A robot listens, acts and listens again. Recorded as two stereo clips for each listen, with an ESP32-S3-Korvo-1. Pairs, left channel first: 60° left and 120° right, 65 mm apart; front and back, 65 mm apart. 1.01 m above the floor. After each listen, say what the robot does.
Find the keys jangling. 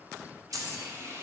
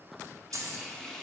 Turn 145° right.
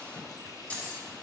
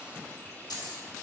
Turn 10° right.
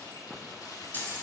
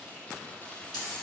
Found it: keys jangling, straight ahead.